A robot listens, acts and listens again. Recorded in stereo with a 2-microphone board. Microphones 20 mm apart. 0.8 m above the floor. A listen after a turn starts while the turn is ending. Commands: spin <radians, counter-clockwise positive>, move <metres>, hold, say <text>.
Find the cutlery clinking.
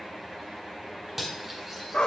spin -0.52
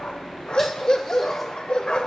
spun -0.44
hold
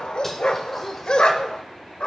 hold
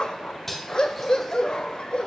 spin 0.17
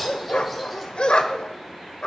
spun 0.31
hold
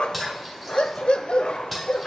say Found it: cutlery clinking, straight ahead.